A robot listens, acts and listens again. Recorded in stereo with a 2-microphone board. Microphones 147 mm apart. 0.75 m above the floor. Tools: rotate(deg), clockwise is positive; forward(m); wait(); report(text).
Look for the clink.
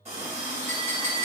rotate(-30)
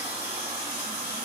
wait()
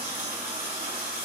wait()
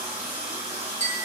rotate(-140)
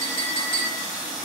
rotate(-40)
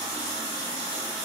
wait()
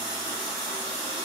wait()
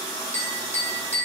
rotate(-10)
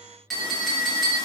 report("Facing the clink, under 1 m away.")